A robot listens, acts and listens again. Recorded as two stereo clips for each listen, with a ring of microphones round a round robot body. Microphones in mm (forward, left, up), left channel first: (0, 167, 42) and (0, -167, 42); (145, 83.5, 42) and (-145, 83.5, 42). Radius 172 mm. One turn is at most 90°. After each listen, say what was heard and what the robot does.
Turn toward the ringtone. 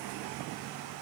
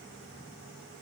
Keep listening.
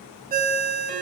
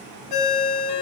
The ringtone: 25° right. Turn 25° right.
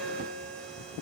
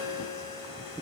Facing the ringtone, 2 to 4 m away.